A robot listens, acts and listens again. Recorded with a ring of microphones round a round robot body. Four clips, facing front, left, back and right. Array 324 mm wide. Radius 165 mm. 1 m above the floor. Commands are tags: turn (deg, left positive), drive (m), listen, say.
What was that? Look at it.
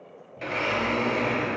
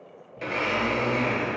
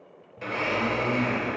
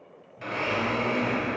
<turn deg="45"/>
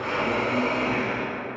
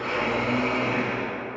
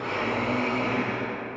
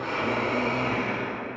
<turn deg="10"/>
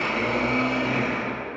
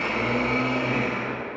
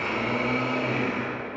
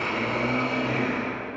<say>Found it: a blender, straight ahead, 2 to 4 m away.</say>